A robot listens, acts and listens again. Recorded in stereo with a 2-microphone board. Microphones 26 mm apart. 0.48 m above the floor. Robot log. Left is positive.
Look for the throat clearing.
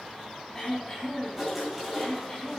note: The throat clearing: about 20° left or 160° left.
cmd yaw +20
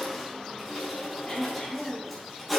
note: So it is at 145° left.
cmd yaw +145
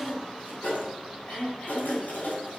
note: The throat clearing is now 60° left.
cmd yaw +60
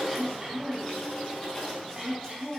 note: The throat clearing is now 10° right.
cmd yaw -10
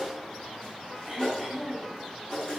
end: Found it: throat clearing, straight ahead.